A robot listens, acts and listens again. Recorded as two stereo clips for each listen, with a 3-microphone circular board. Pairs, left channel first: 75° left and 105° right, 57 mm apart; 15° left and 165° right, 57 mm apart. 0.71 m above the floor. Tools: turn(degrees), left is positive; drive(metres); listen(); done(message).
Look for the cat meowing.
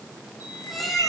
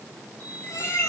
turn(degrees=-15)
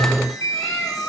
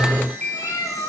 done("Found it: a cat meowing, straight ahead.")